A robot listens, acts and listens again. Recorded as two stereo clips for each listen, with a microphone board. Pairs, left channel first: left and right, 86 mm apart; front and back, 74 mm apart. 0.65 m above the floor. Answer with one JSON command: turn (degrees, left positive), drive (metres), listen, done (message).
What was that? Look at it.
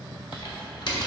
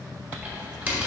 {"turn": 110}
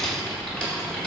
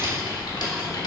{"turn": 10}
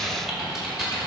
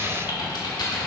{"done": "Facing the typing on a keyboard, 1 to 2 m away."}